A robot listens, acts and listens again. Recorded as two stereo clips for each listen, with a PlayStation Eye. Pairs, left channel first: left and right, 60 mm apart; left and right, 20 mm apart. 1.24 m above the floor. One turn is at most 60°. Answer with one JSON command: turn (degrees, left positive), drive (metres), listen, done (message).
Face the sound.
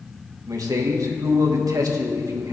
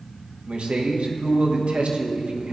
{"turn": -60}
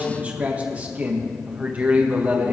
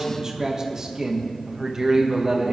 {"turn": -25}
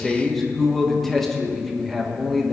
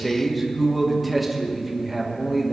{"done": "Facing the man speaking."}